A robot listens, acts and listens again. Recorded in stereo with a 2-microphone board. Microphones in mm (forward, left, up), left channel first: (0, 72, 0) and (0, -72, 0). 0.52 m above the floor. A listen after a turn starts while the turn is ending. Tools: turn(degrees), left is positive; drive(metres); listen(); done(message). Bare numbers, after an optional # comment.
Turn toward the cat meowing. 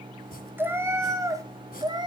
# The cat meowing: about 30° right or 150° right.
turn(-30)
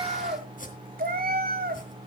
# So it is at 100° right.
turn(-100)
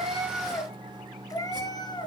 # The cat meowing is now 30° left.
turn(30)
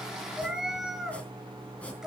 done("Found it: a cat meowing, straight ahead.")